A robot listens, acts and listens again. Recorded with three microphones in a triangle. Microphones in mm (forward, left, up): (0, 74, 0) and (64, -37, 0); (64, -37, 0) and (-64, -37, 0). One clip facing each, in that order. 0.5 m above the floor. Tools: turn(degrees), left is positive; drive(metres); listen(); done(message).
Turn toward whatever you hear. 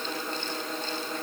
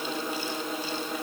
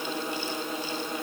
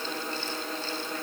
listen()
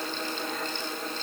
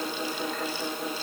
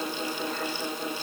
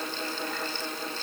listen()
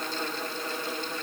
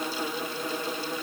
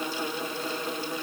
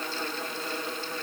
done("I can't make out anything to turn to.")